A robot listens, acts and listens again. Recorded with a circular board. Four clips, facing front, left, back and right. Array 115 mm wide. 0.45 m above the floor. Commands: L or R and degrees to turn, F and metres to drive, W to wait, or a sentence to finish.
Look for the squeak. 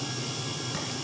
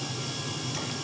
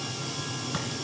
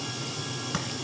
W
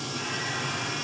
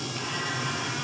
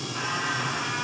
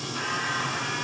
W
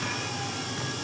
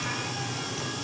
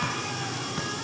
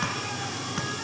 I can't make out a squeak to turn to.